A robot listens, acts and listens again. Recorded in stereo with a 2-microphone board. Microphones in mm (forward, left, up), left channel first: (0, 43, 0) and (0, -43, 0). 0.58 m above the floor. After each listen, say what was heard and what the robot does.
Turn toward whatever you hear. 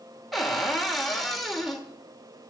Turn 30° left.
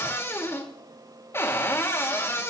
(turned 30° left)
So it is at 145° left. Turn 145° left.
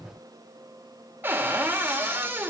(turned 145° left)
The cupboard door is now 25° right. Turn 25° right.
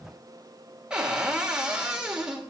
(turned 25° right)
The cupboard door is now 10° right. Turn 10° right.
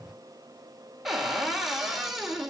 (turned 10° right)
Found it: a cupboard door, straight ahead, 2 to 4 m away.